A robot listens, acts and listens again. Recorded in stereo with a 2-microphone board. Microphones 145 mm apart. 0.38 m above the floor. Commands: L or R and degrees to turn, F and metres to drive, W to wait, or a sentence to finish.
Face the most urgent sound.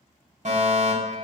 R55
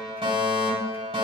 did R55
R50
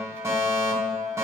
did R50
R25
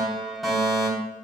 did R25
Found it: a fire alarm, straight ahead.